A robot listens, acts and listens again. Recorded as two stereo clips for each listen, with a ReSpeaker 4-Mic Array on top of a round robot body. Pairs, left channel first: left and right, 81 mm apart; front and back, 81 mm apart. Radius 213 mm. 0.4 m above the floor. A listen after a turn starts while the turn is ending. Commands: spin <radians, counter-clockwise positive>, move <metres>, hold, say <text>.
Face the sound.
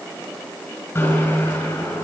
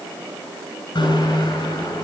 spin 0.44
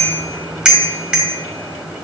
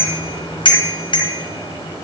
spin -0.17
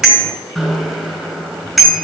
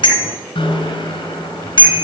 say Facing the bicycle bell, over 4 m away.